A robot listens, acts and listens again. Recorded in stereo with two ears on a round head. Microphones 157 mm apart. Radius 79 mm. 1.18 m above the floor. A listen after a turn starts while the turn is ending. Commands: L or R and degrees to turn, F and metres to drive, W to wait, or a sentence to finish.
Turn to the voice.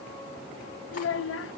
L90
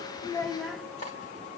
Facing the child speaking, 1 to 2 m away.